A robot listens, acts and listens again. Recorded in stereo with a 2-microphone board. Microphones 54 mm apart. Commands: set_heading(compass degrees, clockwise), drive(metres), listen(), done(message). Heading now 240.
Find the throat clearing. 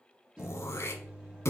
set_heading(180)
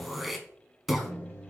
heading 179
done("Facing the throat clearing.")